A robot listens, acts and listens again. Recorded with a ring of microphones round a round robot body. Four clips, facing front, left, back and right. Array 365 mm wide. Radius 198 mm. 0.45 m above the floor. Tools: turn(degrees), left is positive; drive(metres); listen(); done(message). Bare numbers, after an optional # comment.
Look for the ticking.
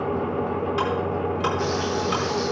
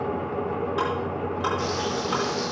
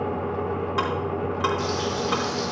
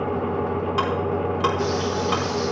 # The ticking: 105° right.
turn(-105)
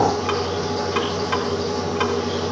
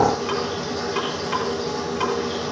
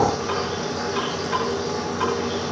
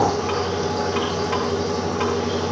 listen()
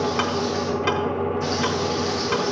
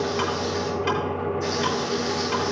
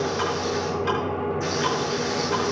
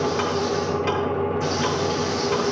done("Found it: ticking, straight ahead, over 4 m away.")